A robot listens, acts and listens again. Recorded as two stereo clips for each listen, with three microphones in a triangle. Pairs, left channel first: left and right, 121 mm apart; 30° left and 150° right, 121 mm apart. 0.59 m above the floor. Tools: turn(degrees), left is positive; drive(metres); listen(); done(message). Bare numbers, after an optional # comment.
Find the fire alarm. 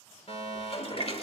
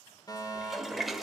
# The fire alarm: 80° left.
turn(80)
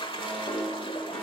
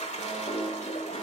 listen()
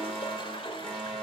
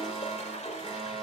done("Facing the fire alarm.")